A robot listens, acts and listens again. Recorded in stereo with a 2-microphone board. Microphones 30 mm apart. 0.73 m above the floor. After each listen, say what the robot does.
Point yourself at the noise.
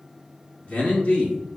Turn 45° left.
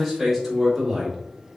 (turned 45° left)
Facing the man speaking, 2 to 4 m away.